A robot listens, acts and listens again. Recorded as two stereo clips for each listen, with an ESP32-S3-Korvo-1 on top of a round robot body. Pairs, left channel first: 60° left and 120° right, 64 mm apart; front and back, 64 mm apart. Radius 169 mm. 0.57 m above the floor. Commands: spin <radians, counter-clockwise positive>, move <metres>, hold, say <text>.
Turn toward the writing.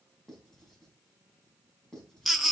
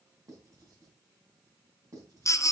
spin 2.44
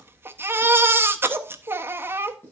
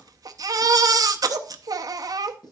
say Found it: writing, straight ahead, 2 to 4 m away.